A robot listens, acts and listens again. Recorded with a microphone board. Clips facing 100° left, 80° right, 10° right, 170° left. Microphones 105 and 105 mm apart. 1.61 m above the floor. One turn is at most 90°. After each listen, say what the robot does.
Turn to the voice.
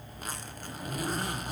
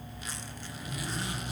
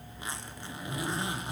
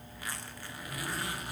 Keep listening.
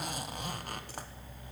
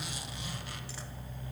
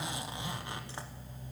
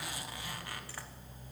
Keep listening.
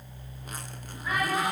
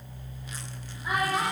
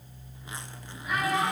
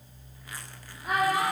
Turn 90° right.
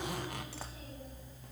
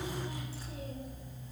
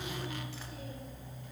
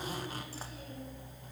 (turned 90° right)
Turn 60° right.
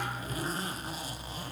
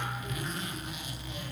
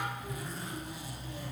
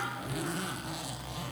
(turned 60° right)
Keep listening.
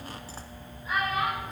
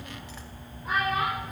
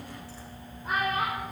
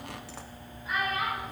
Turn 50° right.
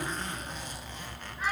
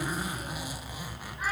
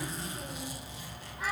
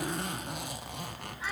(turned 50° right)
Keep listening.
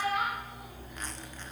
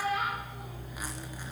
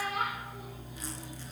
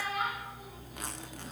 Found it: a child speaking, straight ahead.